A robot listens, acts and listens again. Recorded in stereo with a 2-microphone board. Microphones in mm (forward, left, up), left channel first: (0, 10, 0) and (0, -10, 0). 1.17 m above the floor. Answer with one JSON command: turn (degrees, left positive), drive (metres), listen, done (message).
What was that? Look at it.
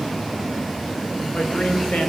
{"listen": true}
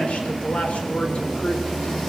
{"turn": 90}
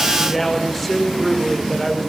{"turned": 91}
{"done": "Found it: a man speaking, straight ahead."}